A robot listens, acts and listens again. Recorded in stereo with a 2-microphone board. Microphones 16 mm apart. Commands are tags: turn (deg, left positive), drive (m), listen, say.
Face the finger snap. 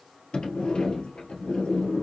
<listen/>
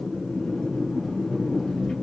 <listen/>
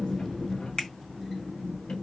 <turn deg="60"/>
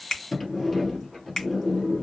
<turn deg="50"/>
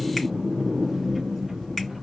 <listen/>
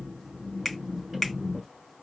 <turn deg="15"/>
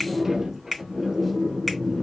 <say>Found it: a finger snap, straight ahead, 2 to 4 m away.</say>